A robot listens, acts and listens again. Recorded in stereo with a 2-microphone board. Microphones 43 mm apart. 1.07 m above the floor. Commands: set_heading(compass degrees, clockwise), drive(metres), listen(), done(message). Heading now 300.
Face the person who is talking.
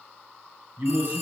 set_heading(355)
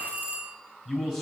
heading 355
set_heading(5)
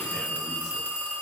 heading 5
listen()
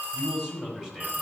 set_heading(15)
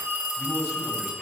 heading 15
listen()
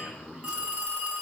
set_heading(30)
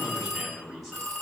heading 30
done("Found it: a man speaking, straight ahead, over 4 m away.")